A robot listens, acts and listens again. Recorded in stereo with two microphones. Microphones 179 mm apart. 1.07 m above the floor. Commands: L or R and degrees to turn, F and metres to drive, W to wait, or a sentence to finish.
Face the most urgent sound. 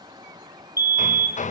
R55
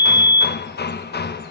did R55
R55
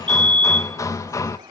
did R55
Found it: a fire alarm, straight ahead, 2 to 4 m away.